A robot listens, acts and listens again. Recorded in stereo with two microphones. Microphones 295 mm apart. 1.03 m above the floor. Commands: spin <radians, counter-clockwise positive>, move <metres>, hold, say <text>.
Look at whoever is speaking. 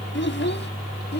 spin 0.61
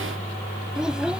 say Facing the child speaking.